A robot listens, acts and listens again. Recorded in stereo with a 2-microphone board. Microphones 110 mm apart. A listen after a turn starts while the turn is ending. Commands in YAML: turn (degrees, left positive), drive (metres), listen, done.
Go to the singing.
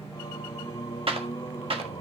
turn: 35
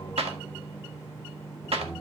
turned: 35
drive: 1.0
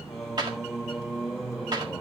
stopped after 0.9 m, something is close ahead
done: "Arrived at the singing, straight ahead."